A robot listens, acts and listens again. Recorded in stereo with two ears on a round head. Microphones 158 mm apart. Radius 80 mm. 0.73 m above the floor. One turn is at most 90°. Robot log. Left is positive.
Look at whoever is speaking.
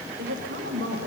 note: The woman speaking: about 65° right or 115° right.
cmd yaw -65
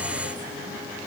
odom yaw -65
cmd idle
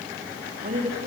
note: So it is at 45° right.
cmd yaw -45
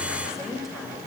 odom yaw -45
end: Facing the woman speaking.